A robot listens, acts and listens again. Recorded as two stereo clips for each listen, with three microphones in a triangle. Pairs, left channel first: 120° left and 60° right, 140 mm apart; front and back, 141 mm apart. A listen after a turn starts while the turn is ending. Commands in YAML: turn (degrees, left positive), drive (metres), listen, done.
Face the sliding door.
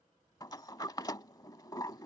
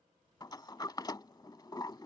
turn: 60
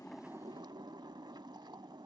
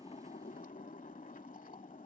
done: "Found it: a sliding door, straight ahead."